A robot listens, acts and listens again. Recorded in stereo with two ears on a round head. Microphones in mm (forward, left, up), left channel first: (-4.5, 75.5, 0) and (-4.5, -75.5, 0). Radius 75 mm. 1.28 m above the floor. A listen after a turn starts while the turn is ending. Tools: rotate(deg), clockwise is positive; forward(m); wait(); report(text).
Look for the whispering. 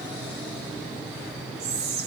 rotate(65)
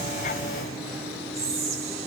rotate(45)
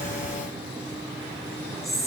report("Facing the whispering, 1 to 2 m away.")